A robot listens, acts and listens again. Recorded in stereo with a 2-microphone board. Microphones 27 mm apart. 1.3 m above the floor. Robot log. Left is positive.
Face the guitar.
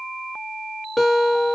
cmd yaw +30
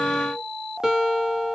note: So it is at 25° right.
cmd yaw -25
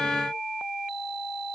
cmd idle
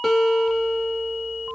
note: The guitar is now 15° left.
cmd yaw +15
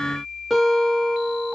end: Found it: a guitar, straight ahead.